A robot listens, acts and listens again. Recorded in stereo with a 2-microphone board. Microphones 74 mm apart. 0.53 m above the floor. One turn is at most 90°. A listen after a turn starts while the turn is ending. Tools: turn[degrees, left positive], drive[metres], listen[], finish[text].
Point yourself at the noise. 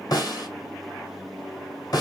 Thought: The snare drum: about 60° left or 120° left.
Action: turn[60]
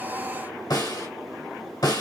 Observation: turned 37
Thought: So it is at 75° left.
Action: turn[75]
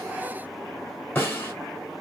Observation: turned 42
Thought: The snare drum is now 30° left.
Action: turn[30]
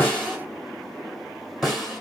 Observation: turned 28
Action: finish[Found it: a snare drum, straight ahead, 1 to 2 m away.]